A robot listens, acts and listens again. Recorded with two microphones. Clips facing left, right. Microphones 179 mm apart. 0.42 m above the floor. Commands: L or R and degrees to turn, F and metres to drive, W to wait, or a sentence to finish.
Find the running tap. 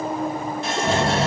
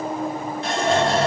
L30
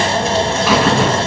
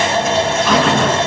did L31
W
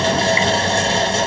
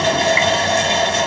W
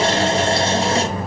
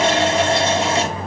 I heard a running tap, but can't make it out now. It was about 30° right or 150° left.